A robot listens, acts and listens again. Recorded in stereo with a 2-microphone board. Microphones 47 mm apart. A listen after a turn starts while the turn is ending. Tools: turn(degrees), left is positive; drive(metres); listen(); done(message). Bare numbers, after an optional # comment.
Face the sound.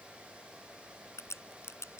# The crack: about 75° left or 105° left.
turn(75)
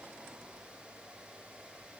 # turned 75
listen()
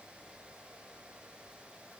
done("I heard a crack, but can't make it out now. It was about straight ahead or 30° left.")